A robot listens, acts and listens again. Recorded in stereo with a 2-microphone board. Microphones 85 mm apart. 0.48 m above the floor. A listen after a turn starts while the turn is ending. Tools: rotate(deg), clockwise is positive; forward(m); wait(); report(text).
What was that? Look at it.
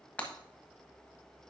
rotate(-15)
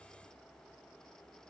wait()
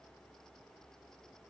report("I heard breaking glass, but can't make it out now. It was about straight ahead or 150° left.")